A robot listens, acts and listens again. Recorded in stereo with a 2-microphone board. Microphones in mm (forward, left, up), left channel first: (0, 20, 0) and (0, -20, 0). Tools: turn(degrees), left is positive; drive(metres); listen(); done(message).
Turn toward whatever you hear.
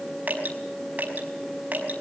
turn(degrees=-40)
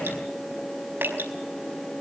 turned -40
turn(degrees=-95)
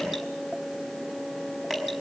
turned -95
done("Facing the dripping, over 4 m away.")